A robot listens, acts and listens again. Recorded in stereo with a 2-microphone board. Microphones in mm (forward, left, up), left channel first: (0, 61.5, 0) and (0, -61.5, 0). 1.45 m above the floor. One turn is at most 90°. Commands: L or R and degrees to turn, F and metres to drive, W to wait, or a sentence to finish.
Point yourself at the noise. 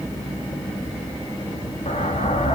L65
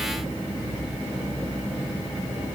W
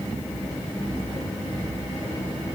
I heard an explosion, but can't make it out now. It was about straight ahead or 50° left.